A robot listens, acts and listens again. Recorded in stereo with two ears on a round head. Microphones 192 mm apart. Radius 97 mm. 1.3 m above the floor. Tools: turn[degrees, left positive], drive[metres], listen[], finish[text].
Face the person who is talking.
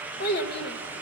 Thought: The child speaking: about 50° left or 130° left.
Action: turn[50]
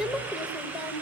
Action: finish[Facing the child speaking, 1 to 2 m away.]